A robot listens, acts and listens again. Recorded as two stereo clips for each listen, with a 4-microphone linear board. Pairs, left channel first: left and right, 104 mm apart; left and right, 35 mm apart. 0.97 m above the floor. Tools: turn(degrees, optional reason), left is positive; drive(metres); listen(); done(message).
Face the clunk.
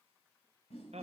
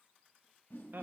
listen()
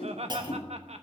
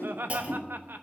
turn(degrees=-40, reason="The clunk: about 40° right or 140° right.")
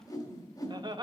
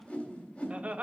listen()
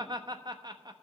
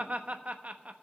done("I heard a clunk, but can't make it out now. It was about straight ahead or 100° right.")